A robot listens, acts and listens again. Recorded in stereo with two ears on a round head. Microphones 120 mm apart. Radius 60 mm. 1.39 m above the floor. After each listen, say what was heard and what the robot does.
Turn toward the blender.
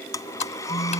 The blender: about 25° left or 155° left. Turn 25° left.
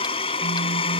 So it is at 125° left. Turn 125° left.
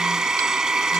Found it: a blender, straight ahead.